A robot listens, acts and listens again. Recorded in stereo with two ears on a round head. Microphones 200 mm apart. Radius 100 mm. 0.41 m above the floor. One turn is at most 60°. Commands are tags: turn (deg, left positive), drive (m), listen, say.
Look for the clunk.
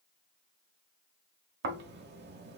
<listen/>
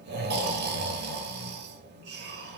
<listen/>
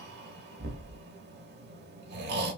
<say>I can't make out a clunk to turn to.</say>